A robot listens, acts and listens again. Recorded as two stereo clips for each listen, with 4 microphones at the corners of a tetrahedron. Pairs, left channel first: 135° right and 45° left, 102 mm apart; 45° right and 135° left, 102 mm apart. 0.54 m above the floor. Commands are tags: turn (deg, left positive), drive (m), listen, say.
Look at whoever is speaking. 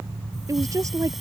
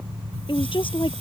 <turn deg="-15"/>
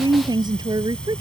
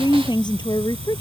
<say>Found it: a woman speaking, straight ahead.</say>